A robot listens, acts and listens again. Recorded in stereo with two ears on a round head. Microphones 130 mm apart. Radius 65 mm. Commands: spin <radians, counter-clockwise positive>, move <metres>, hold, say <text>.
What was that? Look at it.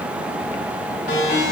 spin 1.31
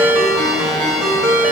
say Found it: a ringtone, straight ahead, 2 to 4 m away.